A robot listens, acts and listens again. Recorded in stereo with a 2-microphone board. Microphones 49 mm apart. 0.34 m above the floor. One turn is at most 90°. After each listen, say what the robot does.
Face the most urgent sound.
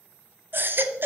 Turn 45° right.
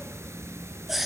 Facing the baby crying, under 1 m away.